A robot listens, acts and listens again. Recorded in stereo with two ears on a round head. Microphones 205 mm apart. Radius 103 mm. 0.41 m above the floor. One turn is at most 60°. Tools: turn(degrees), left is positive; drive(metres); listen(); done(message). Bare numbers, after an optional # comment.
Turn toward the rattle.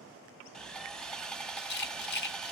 # The rattle: about 45° left or 135° left.
turn(45)
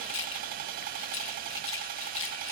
# So it is at 80° left.
turn(60)
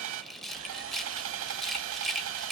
done("Found it: a rattle, straight ahead.")